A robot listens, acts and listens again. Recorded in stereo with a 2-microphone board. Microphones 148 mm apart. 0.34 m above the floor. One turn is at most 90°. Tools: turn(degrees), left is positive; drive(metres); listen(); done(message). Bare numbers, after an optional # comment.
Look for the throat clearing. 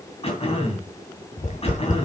# The throat clearing: about 40° left or 140° left.
turn(40)
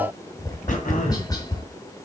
# So it is at 90° left.
turn(90)
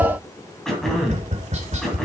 done("Facing the throat clearing, 2 to 4 m away.")